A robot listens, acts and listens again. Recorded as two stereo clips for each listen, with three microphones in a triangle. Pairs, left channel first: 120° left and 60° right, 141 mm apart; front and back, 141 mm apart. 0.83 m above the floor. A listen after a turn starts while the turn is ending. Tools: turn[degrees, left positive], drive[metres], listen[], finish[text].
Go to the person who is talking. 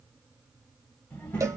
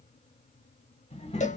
Thought: The child speaking: 40° left.
Action: turn[40]
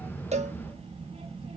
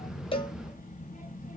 Thought: The child speaking is now 20° right.
Action: turn[-20]
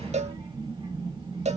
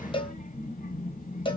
Thought: The child speaking is now 10° right.
Action: turn[-10]
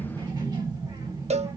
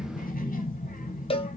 Action: drive[1.0]
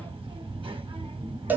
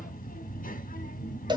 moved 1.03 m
Thought: The child speaking is now 10° right.
Action: turn[-10]
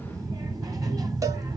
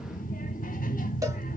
Action: drive[1.0]
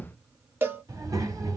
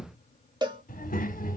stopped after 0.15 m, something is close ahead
Action: finish[Arrived at the child speaking, straight ahead.]